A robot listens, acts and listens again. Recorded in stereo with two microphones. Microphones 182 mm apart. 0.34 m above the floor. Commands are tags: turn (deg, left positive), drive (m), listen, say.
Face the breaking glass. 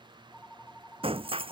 <turn deg="-30"/>
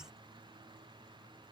<listen/>
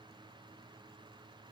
<say>I heard breaking glass, but can't make it out now. It was about straight ahead or 120° right.</say>